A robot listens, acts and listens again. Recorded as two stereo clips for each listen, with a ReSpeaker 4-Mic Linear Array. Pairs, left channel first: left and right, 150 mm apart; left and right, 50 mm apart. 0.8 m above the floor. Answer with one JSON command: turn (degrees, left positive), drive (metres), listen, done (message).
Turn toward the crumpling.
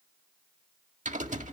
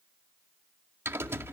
{"listen": true}
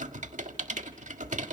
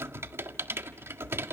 {"listen": true}
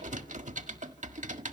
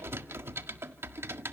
{"done": "I can't make out crumpling to turn to."}